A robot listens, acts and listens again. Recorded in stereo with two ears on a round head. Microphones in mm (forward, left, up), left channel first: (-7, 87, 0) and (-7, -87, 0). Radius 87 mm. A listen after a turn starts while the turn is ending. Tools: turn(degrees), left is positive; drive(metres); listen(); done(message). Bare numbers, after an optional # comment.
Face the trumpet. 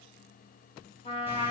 # The trumpet: about 30° left or 150° left.
turn(30)
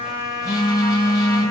# So it is at 115° left.
turn(115)
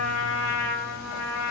done("Facing the trumpet.")